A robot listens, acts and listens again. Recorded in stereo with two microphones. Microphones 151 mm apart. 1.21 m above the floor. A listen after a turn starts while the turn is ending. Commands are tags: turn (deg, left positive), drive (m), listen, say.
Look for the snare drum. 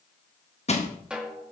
<turn deg="-30"/>
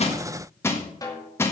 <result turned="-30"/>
<turn deg="25"/>
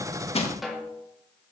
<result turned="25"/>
<say>Facing the snare drum.</say>